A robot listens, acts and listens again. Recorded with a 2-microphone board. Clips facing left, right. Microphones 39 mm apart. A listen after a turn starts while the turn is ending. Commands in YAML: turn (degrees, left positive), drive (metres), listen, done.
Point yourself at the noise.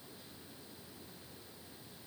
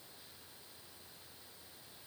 listen: true
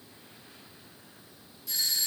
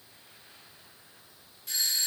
turn: -45
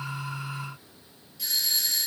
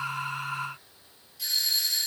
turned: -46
done: "Found it: a doorbell, straight ahead."